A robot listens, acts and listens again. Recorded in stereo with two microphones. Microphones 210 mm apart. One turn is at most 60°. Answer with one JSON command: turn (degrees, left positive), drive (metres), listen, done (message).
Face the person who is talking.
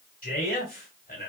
{"turn": 45}
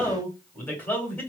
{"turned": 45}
{"turn": 10}
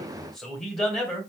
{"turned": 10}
{"done": "Found it: a man speaking, straight ahead, 1 to 2 m away."}